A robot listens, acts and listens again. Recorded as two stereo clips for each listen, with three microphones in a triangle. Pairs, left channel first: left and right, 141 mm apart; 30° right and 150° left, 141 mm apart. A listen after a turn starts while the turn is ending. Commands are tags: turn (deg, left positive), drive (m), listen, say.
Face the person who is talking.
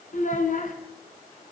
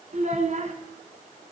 <turn deg="115"/>
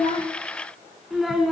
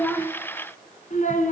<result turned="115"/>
<say>Facing the child speaking, 2 to 4 m away.</say>